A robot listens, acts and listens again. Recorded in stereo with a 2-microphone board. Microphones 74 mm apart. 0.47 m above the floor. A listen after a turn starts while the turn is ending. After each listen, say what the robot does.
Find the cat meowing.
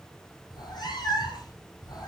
Turn 70° left.
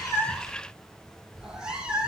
Turn 15° right.
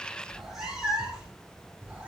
Turn 15° right.
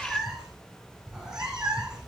Found it: a cat meowing, straight ahead, 2 to 4 m away.